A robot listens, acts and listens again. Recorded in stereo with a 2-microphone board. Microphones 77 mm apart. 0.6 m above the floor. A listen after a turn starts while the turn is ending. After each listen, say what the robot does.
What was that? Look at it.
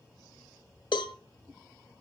Turn 90° left.
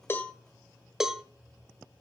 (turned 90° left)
Facing the cowbell.